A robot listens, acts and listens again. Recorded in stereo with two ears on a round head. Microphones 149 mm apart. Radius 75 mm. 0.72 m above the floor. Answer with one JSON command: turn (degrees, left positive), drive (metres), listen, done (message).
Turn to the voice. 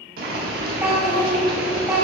{"turn": -30}
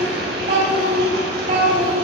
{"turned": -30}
{"turn": -135}
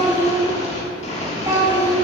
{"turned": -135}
{"turn": -15}
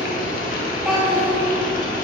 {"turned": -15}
{"done": "Facing the child speaking, 1 to 2 m away."}